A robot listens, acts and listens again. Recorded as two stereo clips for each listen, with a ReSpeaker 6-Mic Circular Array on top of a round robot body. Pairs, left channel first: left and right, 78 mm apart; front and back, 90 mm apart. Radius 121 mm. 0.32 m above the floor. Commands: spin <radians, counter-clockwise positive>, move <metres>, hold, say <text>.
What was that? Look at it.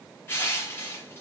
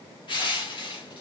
spin 0.52
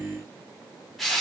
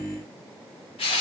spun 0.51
say Facing the crushing, 1 to 2 m away.